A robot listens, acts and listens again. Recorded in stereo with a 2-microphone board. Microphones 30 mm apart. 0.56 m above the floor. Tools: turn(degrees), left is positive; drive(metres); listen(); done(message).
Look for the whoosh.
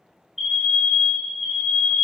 listen()
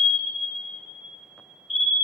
listen()
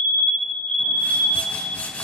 turn(degrees=70)
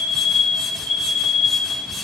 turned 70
done("Facing the whoosh, 1 to 2 m away.")